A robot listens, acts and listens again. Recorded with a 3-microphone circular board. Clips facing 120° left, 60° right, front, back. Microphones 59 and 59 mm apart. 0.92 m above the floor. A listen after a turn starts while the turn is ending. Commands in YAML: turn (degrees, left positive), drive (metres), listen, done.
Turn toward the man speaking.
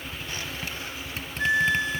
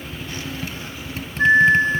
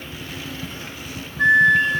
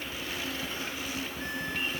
listen: true
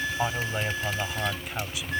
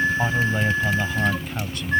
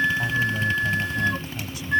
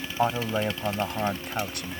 turn: -155
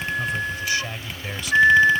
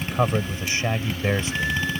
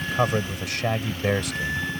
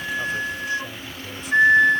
done: "Found it: a man speaking, straight ahead."